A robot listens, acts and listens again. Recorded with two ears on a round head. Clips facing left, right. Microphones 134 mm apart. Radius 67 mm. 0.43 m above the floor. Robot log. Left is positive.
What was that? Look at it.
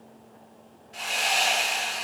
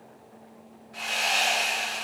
note: The sawing: about 35° left or 145° left.
cmd yaw +35
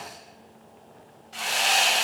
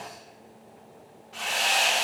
note: So it is at 110° left.
cmd yaw +110
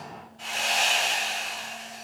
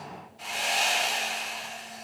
note: The sawing is now 10° right.
cmd yaw -10
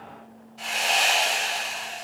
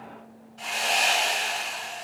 end: Found it: sawing, straight ahead, 2 to 4 m away.